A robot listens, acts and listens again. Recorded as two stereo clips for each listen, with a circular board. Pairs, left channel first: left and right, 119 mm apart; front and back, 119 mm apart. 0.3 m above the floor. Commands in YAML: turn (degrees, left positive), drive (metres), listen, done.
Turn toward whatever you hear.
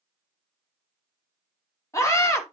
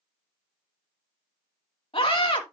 turn: 30
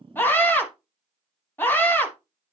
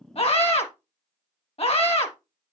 turn: 20
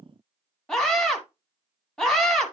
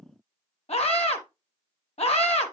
done: "Facing the scream, 2 to 4 m away."